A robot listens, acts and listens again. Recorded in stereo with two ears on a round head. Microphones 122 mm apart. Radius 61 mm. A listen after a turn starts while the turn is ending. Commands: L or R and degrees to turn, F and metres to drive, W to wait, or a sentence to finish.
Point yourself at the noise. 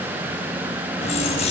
L50
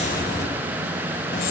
L75
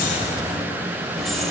Facing the keys jangling.